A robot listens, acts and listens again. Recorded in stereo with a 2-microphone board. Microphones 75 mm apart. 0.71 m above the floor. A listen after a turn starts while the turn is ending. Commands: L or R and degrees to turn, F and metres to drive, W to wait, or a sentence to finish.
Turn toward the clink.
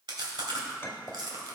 L30
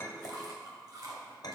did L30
L115
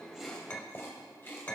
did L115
L25
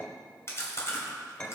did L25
L20
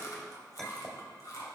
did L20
Found it: a clink, straight ahead.